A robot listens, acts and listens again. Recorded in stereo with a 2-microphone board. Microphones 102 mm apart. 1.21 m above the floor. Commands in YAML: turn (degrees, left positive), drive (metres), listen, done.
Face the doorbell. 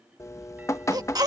listen: true
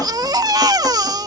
listen: true
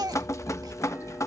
done: "I can't make out a doorbell, only a baby crying and dripping."